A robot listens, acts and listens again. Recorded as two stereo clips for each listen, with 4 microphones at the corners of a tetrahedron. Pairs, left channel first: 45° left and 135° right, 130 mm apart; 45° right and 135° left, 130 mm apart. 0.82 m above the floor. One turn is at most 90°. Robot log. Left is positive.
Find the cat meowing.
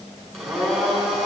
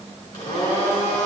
cmd idle
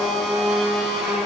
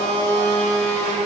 cmd idle
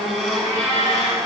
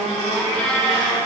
note: The cat meowing: 25° left.
cmd yaw +25
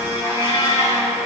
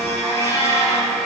note: The cat meowing is now 15° left.
cmd yaw +15
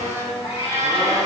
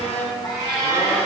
note: The cat meowing is now 10° left.
cmd yaw +10
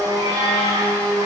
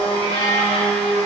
note: The cat meowing is now 10° left.
cmd yaw +10
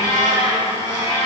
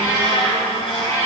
end: Found it: a cat meowing, straight ahead, over 4 m away.